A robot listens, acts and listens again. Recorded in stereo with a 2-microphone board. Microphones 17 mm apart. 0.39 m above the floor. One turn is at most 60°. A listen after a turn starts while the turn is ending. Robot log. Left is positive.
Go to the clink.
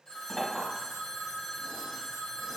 note: The clink: about 25° left or 155° left.
cmd yaw +25
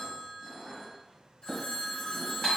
note: So it is at 125° left.
cmd yaw +60
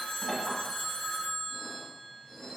note: The clink is now 75° left.
cmd yaw +60
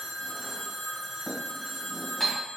note: The clink is now 50° left.
cmd yaw +50
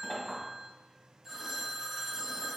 cmd idle
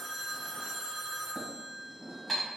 note: The clink is now 10° right.
cmd yaw -10
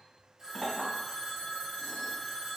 cmd fwd 1.0
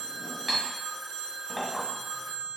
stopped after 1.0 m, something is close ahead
note: The clink is now 10° left.
cmd yaw +10
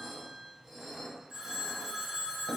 end: Arrived at the clink, straight ahead.